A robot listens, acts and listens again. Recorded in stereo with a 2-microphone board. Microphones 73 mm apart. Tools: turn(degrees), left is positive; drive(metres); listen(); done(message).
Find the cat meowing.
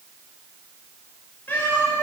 turn(degrees=20)
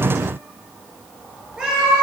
turn(degrees=-15)
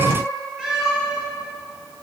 turn(degrees=-10)
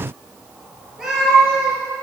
turn(degrees=-10)
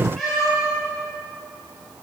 done("Found it: a cat meowing, straight ahead.")